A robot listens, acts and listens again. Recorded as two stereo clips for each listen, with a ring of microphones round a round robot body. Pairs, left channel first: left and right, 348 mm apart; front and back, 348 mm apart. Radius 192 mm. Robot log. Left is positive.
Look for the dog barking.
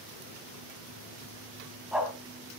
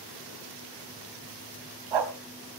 note: The dog barking: straight behind.
cmd yaw +180
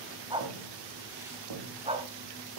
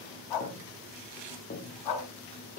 note: The dog barking is now 15° right.
cmd yaw -15
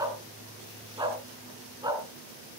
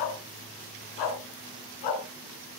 note: The dog barking is now 10° right.
cmd yaw -10
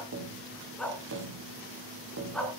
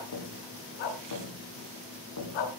end: Found it: a dog barking, straight ahead, 2 to 4 m away.